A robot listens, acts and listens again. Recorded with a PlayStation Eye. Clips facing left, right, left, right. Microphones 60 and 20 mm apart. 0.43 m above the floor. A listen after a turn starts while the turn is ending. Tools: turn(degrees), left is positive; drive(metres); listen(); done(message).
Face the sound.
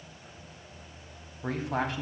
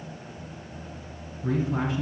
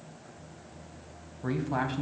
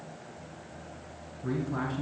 turn(degrees=65)
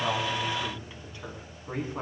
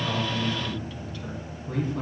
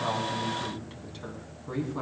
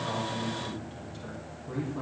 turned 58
turn(degrees=25)
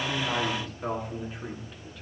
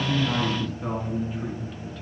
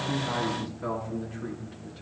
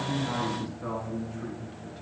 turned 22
done("Facing the man speaking, over 4 m away.")